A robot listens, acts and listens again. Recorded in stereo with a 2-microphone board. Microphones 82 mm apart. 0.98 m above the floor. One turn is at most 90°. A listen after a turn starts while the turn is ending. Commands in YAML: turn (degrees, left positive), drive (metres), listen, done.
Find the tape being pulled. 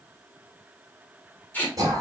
turn: 20
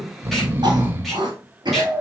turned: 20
listen: true
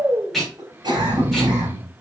done: "Found it: tape being pulled, straight ahead, 2 to 4 m away."